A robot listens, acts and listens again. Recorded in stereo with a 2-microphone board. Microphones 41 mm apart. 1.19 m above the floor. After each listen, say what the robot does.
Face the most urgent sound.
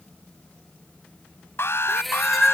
Turn 75° left.
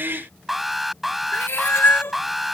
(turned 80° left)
Found it: an alarm, straight ahead.